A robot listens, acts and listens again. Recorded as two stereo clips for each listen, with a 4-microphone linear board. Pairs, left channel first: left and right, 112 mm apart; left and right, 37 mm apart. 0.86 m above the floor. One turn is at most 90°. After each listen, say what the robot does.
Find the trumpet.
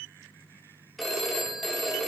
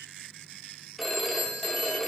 Keep listening.
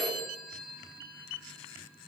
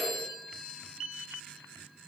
Keep listening.
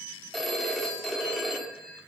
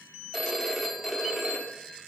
I can't make out a trumpet, only a phone ringing.